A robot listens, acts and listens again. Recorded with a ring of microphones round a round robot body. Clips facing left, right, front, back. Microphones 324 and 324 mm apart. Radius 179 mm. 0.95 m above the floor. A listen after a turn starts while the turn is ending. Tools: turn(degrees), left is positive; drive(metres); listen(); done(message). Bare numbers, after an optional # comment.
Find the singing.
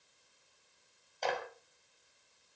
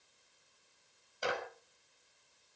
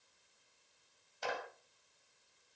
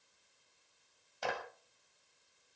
listen()
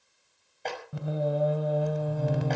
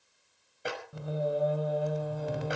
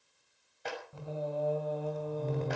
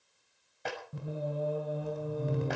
# The singing: 105° left.
turn(105)
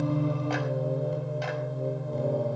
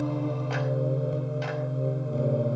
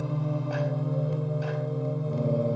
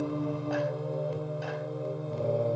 done("Facing the singing.")